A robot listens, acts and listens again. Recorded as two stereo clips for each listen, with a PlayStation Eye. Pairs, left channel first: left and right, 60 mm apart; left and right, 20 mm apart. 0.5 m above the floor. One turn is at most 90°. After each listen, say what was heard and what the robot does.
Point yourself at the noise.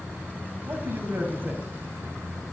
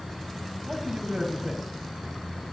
The man speaking: about 35° right or 145° right. Turn 35° right.
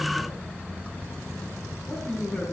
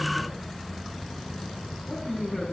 So it is at 20° left. Turn 20° left.
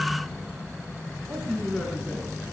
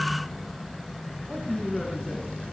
Found it: a man speaking, straight ahead.